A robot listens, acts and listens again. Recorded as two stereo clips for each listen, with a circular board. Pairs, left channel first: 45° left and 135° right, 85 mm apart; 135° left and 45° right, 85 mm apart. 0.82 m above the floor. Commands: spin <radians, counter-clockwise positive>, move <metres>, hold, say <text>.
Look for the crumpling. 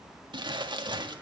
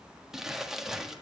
spin -2.27
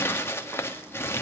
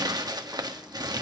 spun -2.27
spin -0.26
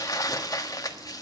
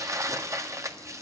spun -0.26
say Found it: crumpling, straight ahead, 1 to 2 m away.